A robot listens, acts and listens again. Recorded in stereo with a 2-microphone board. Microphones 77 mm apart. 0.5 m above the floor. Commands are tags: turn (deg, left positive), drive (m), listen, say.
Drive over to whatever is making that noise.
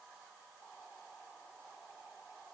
<listen/>
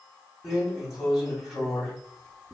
<turn deg="-30"/>
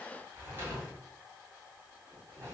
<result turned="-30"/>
<turn deg="-145"/>
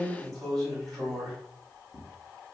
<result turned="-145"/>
<turn deg="10"/>
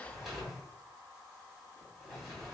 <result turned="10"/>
<drive m="1.0"/>
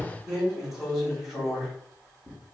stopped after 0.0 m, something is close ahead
<say>Blocked. The drawer is further on, straight ahead.</say>